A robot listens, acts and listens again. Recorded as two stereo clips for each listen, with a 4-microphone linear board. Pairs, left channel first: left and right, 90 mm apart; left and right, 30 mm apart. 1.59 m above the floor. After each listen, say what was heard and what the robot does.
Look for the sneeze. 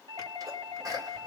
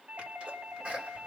The sneeze: about 40° right or 140° right. Turn 40° right.
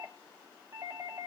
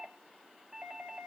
Keep listening.
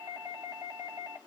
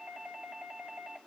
I heard a sneeze, but can't make it out now. It was about straight ahead or 100° right.